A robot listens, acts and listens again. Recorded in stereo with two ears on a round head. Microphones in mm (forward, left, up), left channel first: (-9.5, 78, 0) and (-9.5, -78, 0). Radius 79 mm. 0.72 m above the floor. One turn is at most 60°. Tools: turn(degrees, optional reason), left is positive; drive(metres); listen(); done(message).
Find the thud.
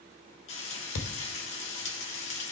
turn(degrees=60)
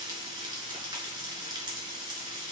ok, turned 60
turn(degrees=30, reason="Nothing new. It was at 30° left.")
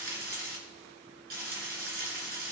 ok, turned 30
done("Facing where the thud came from. I can't hear it now.")